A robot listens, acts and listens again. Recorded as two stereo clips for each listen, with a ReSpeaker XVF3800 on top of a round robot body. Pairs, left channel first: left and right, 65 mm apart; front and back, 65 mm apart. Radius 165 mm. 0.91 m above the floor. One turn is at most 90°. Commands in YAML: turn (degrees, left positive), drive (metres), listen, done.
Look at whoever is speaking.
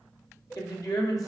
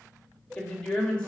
turn: 75
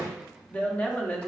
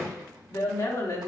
turn: 20
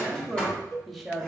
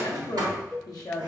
done: "Facing the woman speaking, 1 to 2 m away."